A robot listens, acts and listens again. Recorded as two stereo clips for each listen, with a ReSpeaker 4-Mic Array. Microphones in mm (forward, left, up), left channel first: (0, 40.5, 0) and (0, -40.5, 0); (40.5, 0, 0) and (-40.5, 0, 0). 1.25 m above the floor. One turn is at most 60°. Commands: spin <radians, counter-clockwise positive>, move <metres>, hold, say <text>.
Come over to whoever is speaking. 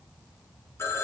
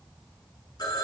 hold
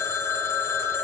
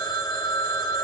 hold
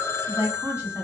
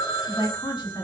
spin -0.52
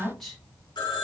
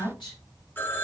move 1.0
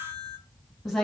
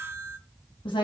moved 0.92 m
move 1.0
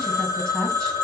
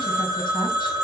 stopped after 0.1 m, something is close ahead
hold
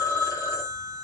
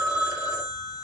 hold
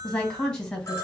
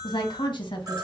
spin 0.17
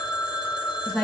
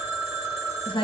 say I am next to the woman speaking.